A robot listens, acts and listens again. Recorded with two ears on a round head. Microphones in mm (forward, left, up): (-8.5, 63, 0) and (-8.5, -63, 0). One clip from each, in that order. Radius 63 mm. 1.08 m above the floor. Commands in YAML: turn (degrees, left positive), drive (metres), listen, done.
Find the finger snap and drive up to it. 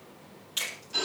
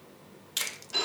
turn: -30
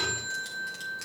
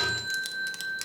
drive: 1.0
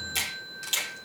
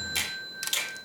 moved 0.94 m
drive: 1.0
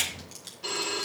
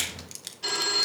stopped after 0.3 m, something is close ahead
done: "I am next to the finger snap."